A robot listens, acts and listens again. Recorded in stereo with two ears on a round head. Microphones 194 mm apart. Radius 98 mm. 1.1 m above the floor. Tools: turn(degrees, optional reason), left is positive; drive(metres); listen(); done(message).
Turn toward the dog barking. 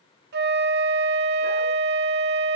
listen()
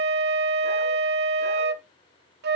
listen()
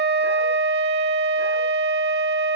done("I can't make out a dog barking, only a flute.")